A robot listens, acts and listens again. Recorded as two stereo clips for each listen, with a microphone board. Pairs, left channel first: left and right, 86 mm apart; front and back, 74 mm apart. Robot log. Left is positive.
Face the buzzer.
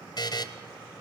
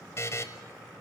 note: The buzzer: 50° left.
cmd yaw +50
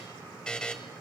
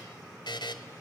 note: The buzzer is now 10° left.
cmd yaw +10
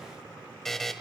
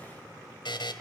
end: Found it: a buzzer, straight ahead.